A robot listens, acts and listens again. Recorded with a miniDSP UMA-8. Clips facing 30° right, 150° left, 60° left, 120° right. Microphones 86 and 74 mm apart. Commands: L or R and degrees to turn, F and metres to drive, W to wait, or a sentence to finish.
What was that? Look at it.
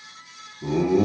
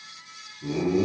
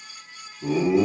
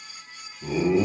R25
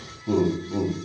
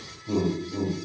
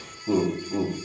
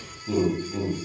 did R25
Facing the laughter, over 4 m away.